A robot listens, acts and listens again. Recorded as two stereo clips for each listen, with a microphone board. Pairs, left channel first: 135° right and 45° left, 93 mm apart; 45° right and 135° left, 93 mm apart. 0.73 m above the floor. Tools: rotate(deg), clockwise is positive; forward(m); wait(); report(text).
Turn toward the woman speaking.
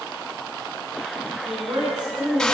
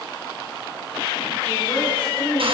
report("Found it: a woman speaking, straight ahead.")